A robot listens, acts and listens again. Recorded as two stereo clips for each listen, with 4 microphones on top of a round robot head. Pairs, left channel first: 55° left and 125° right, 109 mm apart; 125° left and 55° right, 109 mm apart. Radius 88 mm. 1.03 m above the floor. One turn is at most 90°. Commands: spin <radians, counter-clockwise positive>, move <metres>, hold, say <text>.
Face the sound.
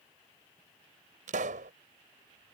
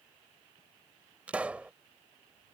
spin -1.57
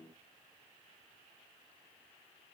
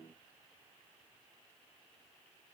spin -0.79
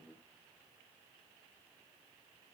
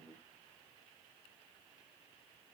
say Facing where the pop came from. I can't hear it now.